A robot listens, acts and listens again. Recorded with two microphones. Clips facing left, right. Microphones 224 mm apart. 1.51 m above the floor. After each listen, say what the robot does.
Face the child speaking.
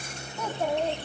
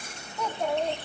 Turn 30° left.
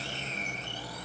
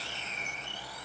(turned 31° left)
Keep listening.
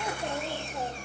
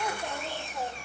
Turn 160° left.
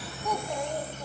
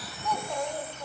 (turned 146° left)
Turn 15° left.
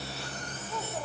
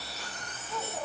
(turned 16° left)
Found it: a child speaking, straight ahead, 2 to 4 m away.